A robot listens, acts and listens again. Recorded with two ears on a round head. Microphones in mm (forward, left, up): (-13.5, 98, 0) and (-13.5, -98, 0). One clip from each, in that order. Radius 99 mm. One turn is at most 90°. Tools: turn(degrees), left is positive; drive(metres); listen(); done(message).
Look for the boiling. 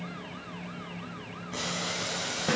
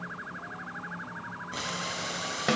turn(degrees=-30)
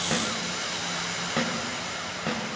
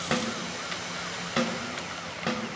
turn(degrees=25)
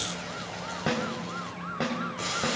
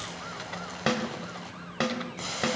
done("Found it: boiling, straight ahead, over 4 m away.")